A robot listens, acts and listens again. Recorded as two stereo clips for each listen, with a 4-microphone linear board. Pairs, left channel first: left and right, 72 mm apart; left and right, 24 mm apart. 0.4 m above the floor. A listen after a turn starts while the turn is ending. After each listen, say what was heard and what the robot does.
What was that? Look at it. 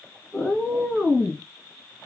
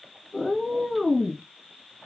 Turn 30° right.
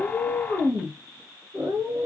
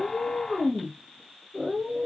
So it is at 115° right. Turn 115° right.
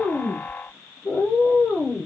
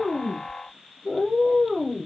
The cat meowing is now 35° left. Turn 35° left.
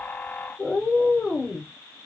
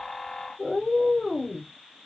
The cat meowing is now 15° left. Turn 15° left.
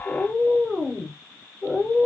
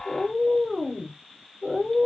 Facing the cat meowing.